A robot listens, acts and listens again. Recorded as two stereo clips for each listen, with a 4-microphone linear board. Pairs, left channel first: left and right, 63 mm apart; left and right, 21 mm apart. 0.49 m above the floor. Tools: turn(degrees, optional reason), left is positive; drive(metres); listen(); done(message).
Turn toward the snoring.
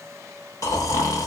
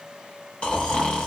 turn(degrees=65, reason="The snoring: about 65° left or 115° left.")
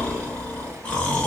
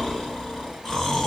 turn(degrees=20, reason="So it is at 20° left.")
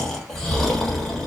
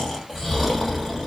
done("Facing the snoring.")